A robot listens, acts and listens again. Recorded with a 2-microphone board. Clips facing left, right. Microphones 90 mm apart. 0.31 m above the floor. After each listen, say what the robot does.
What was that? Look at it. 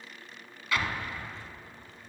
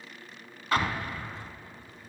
Turn 40° right.
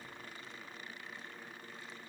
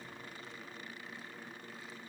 Keep listening.
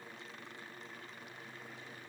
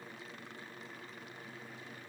I heard an explosion, but can't make it out now. It was about straight ahead or 100° right.